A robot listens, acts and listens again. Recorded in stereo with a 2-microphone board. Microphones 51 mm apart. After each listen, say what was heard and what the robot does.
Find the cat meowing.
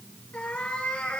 The cat meowing: about 20° left or 160° left. Turn 20° left.
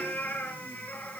The cat meowing: about 35° left or 145° left. Turn 35° left.
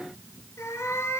So it is at 115° left. Turn 115° left.
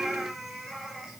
Found it: a cat meowing, straight ahead.